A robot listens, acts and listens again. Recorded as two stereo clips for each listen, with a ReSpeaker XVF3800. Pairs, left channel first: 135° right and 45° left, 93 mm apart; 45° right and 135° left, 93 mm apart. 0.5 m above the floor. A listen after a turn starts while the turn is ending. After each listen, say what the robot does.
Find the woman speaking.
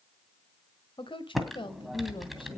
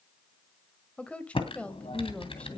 Turn 120° right.
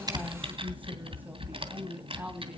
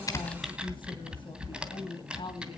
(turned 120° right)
Turn 25° right.
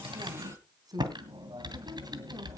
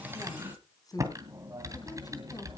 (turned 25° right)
Facing the woman speaking.